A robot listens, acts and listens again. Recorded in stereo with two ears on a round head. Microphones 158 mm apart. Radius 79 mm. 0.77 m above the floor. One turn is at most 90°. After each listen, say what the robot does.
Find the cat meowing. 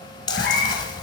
Turn 60° left.
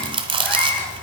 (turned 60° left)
Turn 10° left.
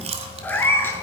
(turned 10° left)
Turn 15° left.
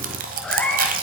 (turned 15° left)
Turn 10° left.
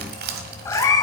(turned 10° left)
Turn 25° left.
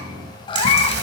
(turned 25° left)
Turn 35° left.
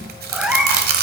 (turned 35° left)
Found it: a cat meowing, straight ahead.